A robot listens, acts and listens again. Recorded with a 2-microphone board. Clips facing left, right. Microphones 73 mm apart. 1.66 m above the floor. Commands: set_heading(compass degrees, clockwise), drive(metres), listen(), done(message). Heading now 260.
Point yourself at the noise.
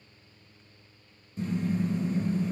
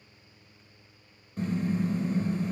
set_heading(320)
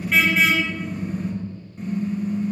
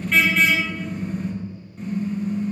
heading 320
done("Found it: a car horn, straight ahead, over 4 m away.")